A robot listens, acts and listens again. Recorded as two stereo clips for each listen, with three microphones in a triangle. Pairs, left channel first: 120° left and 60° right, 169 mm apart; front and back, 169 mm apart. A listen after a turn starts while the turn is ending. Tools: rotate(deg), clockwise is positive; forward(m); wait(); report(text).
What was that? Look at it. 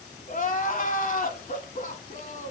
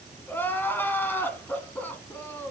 rotate(-80)
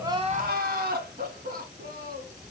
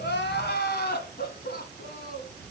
rotate(30)
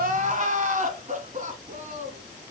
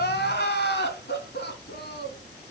rotate(15)
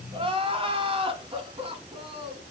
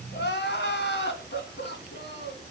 report("Facing the crying.")